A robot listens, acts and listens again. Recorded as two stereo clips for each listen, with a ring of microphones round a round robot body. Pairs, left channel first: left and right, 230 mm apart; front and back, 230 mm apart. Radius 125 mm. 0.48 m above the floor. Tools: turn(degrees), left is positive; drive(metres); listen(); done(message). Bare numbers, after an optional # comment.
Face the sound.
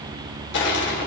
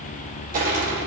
# The crushing: 125° left.
turn(125)
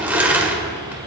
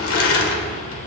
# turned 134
# The crushing is now 10° right.
turn(-10)
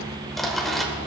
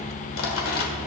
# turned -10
done("Facing the crushing, 1 to 2 m away.")